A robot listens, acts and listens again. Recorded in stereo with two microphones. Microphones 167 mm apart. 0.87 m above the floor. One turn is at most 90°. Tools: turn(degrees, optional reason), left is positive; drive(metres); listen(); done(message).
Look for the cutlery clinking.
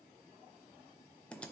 listen()
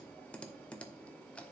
listen()
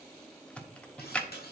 turn(degrees=70, reason="The cutlery clinking: about 70° left or 110° left.")
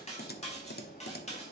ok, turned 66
turn(degrees=40, reason="So it is at 40° left.")
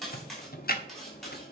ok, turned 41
done("Facing the cutlery clinking.")